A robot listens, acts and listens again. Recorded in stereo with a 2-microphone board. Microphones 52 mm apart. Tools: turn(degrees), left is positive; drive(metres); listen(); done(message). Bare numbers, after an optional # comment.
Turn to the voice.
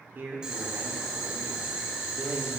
# The man speaking: about 50° right or 130° right.
turn(-50)
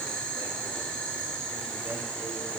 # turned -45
listen()
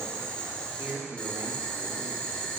# So it is at 70° right.
turn(-70)
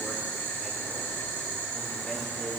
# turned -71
listen()
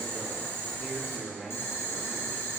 done("Facing the man speaking.")